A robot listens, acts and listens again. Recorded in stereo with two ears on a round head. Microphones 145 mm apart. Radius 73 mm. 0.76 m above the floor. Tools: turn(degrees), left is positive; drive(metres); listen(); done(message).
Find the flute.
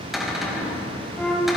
turn(degrees=30)
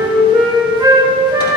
turn(degrees=-25)
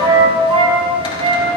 turn(degrees=-35)
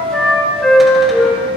done("Found it: a flute, straight ahead, 2 to 4 m away.")